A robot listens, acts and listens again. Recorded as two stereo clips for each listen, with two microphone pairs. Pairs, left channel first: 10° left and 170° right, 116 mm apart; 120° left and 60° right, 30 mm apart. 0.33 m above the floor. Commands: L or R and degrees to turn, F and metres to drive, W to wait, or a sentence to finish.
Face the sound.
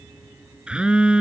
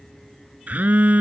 R85
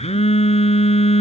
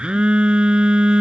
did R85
Facing the phone buzzing.